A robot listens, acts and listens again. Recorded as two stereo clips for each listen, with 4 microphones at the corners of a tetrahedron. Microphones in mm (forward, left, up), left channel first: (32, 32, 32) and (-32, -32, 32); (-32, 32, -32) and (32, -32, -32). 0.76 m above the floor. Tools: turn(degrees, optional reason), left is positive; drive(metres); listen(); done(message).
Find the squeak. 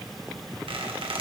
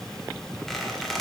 turn(degrees=-135, reason="The squeak: 135° right.")
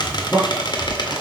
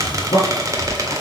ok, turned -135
turn(degrees=10, reason="The squeak is now 10° left.")
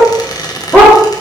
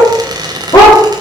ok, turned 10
done("Facing the squeak, 1 to 2 m away.")